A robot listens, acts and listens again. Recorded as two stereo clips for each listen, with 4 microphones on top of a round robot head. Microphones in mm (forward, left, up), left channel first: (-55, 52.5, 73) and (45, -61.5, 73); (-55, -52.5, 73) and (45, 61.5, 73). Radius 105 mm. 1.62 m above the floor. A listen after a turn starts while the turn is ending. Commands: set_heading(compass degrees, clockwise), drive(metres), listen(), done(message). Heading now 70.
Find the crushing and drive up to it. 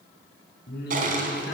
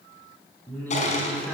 set_heading(155)
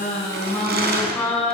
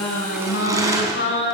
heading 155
set_heading(175)
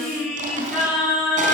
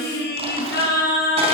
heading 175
listen()
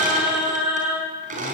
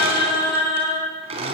drive(1.0)
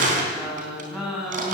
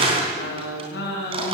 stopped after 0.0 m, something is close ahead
set_heading(185)
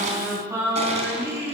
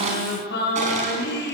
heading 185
listen()
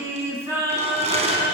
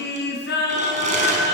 done("Blocked. The crushing is further on, straight ahead.")